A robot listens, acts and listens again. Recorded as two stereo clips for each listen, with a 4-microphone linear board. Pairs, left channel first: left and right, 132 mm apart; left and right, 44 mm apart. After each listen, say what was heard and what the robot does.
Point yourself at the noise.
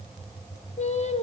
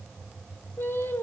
The singing: about 55° left or 125° left. Turn 55° left.
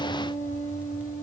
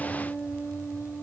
So it is at 75° left. Turn 75° left.
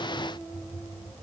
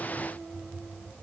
Keep listening.
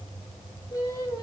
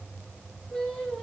The singing is now 30° left. Turn 30° left.
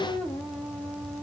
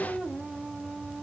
Keep listening.
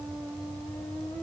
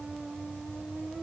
Keep listening.
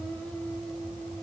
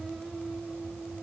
I heard singing from this way, but can't make it out now.